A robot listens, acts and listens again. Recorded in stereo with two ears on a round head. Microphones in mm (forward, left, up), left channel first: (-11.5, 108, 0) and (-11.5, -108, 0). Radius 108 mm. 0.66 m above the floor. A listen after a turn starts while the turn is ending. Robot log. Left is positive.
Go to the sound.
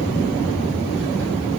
cmd idle
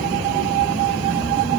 cmd idle
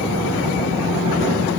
end: I can't make out anything to turn to.